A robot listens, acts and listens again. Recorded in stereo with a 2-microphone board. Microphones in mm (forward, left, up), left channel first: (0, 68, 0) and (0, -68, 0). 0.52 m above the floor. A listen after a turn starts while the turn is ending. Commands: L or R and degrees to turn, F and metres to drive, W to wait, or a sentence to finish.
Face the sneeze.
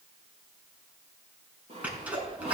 R30
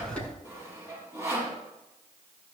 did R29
W
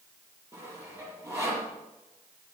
I heard a sneeze, but can't make it out now. It was about 15° left or 140° right.